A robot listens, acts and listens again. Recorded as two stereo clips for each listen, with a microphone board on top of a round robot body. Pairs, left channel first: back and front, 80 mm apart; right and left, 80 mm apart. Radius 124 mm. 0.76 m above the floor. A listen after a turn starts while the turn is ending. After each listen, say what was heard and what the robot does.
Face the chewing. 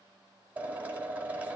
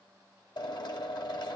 Keep listening.
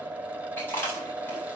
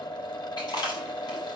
The chewing: 120° right. Turn 120° right.
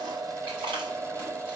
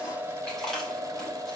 Found it: chewing, straight ahead.